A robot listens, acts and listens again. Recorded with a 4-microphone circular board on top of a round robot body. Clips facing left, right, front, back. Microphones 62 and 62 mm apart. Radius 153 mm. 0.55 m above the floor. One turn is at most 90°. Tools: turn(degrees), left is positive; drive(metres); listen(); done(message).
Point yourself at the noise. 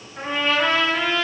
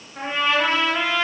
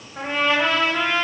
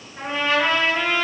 turn(degrees=-15)
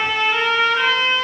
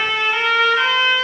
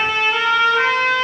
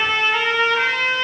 done("Facing the trumpet.")